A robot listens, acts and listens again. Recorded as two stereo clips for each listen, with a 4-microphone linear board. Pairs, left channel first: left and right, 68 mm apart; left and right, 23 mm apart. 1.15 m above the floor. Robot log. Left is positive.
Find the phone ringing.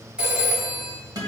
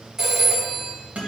note: The phone ringing: about 15° right or 165° right.
cmd yaw -15
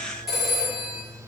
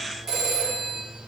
end: Facing the phone ringing, 2 to 4 m away.